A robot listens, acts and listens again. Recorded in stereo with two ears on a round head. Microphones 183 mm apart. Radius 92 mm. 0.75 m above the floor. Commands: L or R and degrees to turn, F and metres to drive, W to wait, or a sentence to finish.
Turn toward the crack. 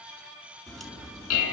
L30
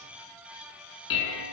W
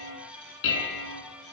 I heard a crack, but can't make it out now. It was about 30° right or 150° left.